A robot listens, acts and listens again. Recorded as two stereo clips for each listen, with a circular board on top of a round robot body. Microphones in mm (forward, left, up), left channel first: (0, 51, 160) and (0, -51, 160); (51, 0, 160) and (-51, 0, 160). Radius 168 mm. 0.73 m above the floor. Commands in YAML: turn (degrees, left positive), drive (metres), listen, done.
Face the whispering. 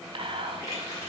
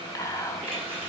turn: -60
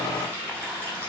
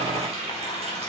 listen: true
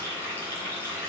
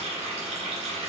listen: true
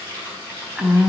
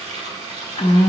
done: "Found it: whispering, straight ahead."